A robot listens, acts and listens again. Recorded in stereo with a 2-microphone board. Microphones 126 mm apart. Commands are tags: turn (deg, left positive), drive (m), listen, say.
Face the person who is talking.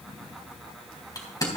<listen/>
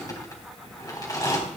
<listen/>
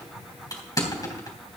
<say>I can't make out anyone speaking to turn to.</say>